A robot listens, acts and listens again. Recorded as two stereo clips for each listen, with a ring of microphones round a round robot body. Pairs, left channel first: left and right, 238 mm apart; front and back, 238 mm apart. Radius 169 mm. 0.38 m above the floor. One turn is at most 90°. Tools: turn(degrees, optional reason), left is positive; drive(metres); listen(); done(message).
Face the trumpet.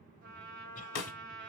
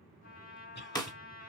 turn(degrees=-50, reason="The trumpet: 50° right.")
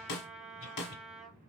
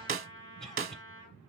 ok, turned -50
done("Found it: a trumpet, straight ahead, 1 to 2 m away.")